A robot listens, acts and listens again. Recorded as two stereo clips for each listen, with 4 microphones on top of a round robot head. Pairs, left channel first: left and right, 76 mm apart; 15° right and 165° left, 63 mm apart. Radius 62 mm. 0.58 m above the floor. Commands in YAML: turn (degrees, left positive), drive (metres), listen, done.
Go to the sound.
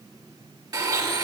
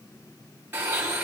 turn: -130
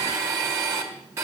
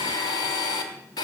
turn: -30
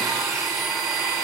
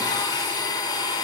drive: 1.0
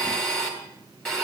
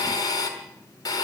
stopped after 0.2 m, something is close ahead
turn: 10
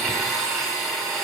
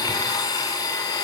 done: "Something is in my way. I am facing the blender but have not reached it."